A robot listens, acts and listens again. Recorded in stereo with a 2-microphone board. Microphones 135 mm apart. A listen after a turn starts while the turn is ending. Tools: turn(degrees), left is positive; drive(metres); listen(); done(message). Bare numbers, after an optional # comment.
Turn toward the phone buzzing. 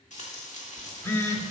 # The phone buzzing: about 20° left or 160° left.
turn(20)
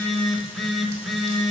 done("Facing the phone buzzing, 1 to 2 m away.")